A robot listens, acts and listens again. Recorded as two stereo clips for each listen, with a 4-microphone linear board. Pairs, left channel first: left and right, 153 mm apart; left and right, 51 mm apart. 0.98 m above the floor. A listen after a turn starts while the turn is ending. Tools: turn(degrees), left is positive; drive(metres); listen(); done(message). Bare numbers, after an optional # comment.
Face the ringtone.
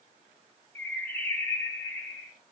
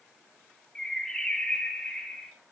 listen()
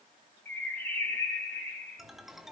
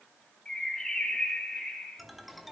turn(30)
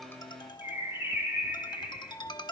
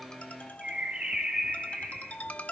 # So it is at 150° left.
turn(150)
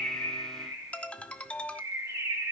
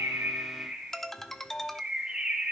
# The ringtone is now 10° left.
turn(10)
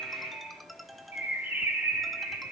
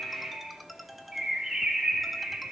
done("Facing the ringtone, under 1 m away.")